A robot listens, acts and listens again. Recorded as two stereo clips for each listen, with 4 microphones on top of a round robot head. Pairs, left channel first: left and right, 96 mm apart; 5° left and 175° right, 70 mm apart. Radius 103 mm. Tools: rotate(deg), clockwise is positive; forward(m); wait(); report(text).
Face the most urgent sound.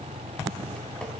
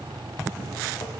wait()
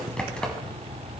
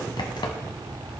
wait()
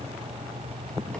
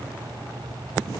report("I can't make out anything urgent, only typing on a keyboard.")